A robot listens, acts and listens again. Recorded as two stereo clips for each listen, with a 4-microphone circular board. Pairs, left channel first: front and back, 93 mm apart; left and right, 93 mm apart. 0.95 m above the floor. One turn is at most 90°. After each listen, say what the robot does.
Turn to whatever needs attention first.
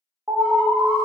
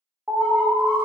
Turn 90° right.
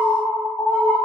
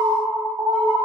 Turn 45° right.
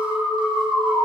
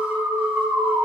Turn 15° right.
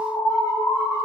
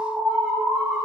Turn 10° right.
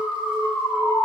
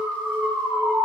Found it: an alarm, straight ahead.